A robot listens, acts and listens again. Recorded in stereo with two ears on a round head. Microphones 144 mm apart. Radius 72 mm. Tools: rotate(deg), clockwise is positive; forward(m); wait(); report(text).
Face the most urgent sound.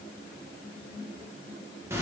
wait()
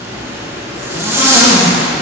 wait()
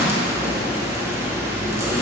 report("I can't make out anything urgent, only a zipper.")